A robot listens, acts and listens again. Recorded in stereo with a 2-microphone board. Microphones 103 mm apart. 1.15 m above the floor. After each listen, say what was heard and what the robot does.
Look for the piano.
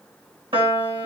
The piano: about 55° right or 125° right. Turn 55° right.
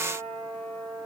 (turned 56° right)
Found it: a piano, straight ahead.